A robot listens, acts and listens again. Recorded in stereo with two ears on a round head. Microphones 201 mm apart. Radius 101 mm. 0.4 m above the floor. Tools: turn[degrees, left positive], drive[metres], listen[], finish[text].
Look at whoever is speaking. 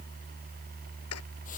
Action: listen[]
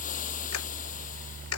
Action: listen[]
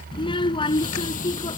Thought: The child speaking: about 20° left or 160° left.
Action: turn[20]
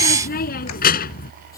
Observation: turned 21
Thought: So it is at 135° left.
Action: turn[135]
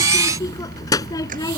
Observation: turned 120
Thought: The child speaking is now 15° left.
Action: turn[15]
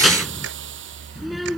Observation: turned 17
Action: finish[Facing the child speaking.]